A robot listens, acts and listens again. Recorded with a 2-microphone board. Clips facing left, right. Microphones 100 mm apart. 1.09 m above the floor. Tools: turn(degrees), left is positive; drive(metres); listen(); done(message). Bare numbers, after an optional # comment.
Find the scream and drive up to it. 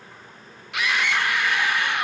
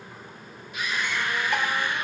turn(90)
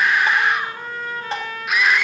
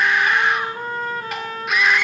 drive(1.0)
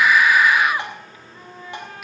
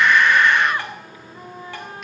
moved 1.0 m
drive(1.0)
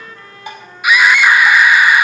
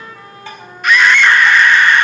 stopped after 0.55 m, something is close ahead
# The scream is now 10° left.
turn(10)
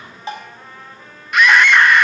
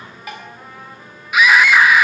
done("Arrived at the scream, straight ahead.")